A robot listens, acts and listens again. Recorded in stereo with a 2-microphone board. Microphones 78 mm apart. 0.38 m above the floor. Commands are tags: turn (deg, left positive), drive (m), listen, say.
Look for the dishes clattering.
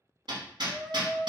<listen/>
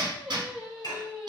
<turn deg="55"/>
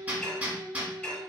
<turn deg="15"/>
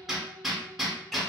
<listen/>
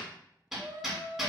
<listen/>
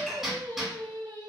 <say>Facing the dishes clattering.</say>